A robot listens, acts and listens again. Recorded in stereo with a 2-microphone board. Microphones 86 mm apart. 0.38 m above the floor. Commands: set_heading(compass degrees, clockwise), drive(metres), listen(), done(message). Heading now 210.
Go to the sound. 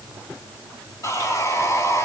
set_heading(175)
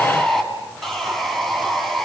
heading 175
drive(1.0)
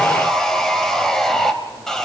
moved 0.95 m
drive(1.0)
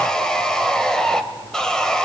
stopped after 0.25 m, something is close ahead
set_heading(165)
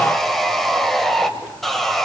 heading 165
done("Arrived at the sawing, straight ahead.")